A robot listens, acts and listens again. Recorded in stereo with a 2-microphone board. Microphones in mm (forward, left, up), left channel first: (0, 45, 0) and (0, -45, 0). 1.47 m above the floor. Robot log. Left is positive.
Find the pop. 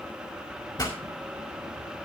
note: The pop: about 45° left or 135° left.
cmd yaw +45
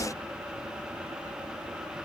cmd idle
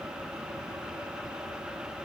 end: I heard a pop, but can't make it out now. It was about straight ahead or 90° left.